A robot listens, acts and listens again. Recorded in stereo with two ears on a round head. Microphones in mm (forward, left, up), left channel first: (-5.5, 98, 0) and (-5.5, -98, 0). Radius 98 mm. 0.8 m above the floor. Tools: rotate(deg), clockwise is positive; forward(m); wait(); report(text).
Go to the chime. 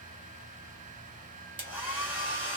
wait()
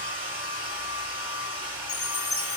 rotate(-30)
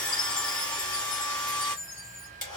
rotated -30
rotate(-120)
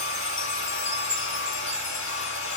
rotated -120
rotate(-55)
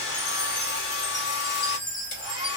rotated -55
rotate(-15)
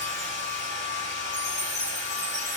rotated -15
forward(1.0)
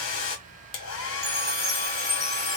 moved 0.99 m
forward(1.0)
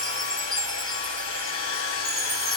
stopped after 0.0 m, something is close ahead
report("I am next to the chime.")